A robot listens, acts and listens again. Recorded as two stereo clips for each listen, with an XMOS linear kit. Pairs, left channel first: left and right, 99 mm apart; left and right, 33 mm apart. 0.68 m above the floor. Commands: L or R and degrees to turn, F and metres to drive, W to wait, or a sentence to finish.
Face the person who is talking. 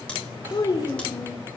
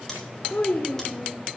L45
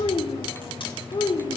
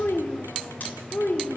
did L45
L125
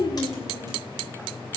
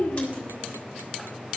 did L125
L50
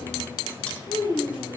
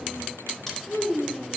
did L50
L40
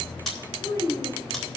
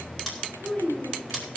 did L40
L30
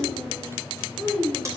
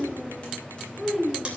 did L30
Found it: a child speaking, straight ahead, 2 to 4 m away.